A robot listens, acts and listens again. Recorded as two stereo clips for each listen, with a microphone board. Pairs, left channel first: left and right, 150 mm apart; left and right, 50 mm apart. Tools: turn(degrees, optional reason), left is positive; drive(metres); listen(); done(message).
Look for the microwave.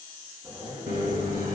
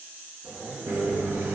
turn(degrees=-70, reason="The microwave: about 70° right or 110° right.")
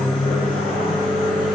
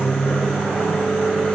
done("Found it: a microwave, straight ahead.")